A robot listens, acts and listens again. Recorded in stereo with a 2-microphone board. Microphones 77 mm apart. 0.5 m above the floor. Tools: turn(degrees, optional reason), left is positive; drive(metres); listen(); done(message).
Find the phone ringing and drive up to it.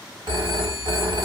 turn(degrees=-70, reason="The phone ringing: about 70° right or 110° right.")
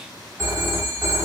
turn(degrees=-35, reason="So it is at 35° right.")
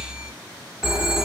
drive(metres=1.0)
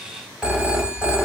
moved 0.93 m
turn(degrees=-10, reason="The phone ringing is now 10° right.")
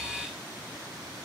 listen()
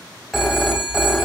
drive(metres=1.0)
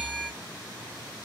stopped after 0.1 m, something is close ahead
done("Arrived at the phone ringing, straight ahead.")